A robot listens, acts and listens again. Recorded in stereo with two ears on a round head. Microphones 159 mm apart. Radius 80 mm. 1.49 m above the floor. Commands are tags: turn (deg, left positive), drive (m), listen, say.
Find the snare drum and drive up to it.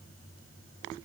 <listen/>
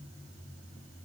<listen/>
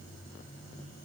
<say>I can't make out a snare drum to turn to.</say>